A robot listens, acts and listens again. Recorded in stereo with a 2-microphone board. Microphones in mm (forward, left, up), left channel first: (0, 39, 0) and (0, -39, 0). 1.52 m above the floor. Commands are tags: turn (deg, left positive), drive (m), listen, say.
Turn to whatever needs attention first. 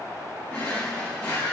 <listen/>
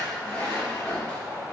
<listen/>
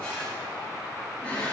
<say>I can't make out anything urgent to turn to.</say>